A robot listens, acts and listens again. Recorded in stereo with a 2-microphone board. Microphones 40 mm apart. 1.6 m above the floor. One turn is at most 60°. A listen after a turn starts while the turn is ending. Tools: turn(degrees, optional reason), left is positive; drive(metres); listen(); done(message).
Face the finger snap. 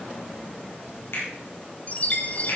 turn(degrees=60)
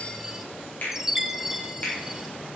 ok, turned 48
turn(degrees=45, reason="So it is at 45° left.")
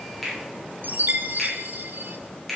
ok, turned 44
done("Found it: a finger snap, straight ahead, over 4 m away.")